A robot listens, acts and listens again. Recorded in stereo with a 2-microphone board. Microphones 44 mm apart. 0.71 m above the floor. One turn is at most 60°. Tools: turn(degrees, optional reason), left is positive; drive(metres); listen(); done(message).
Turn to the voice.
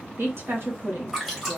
turn(degrees=-55, reason="The woman speaking: about 55° right or 125° right.")
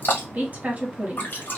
turn(degrees=-40, reason="So it is at 40° right.")
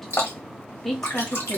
turn(degrees=10, reason="The woman speaking is now 10° left.")
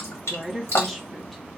done("Found it: a woman speaking, straight ahead, 1 to 2 m away.")